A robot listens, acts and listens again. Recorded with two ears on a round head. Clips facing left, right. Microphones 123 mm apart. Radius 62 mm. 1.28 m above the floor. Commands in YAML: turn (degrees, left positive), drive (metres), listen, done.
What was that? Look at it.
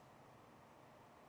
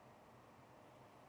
listen: true
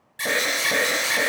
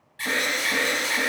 turn: 55
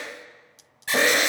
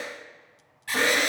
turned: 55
turn: 60
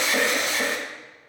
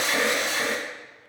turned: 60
done: "Found it: an alarm, straight ahead, 1 to 2 m away."